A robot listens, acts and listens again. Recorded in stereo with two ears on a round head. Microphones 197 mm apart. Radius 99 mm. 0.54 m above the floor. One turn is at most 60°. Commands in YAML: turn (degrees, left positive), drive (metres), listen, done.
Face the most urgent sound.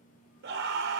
turn: -55
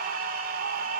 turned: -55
turn: -55
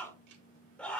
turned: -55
done: "Found it: a scream, straight ahead, 1 to 2 m away."